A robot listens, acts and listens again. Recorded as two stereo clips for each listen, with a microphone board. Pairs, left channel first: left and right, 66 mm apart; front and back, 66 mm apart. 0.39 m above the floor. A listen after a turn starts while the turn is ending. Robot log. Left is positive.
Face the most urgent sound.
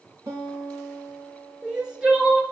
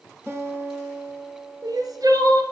note: The crying: 165° right.
cmd yaw -165
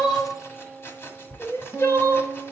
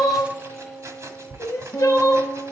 note: The crying is now 40° left.
cmd yaw +40
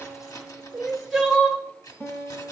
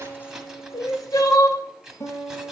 end: Found it: crying, straight ahead, 1 to 2 m away.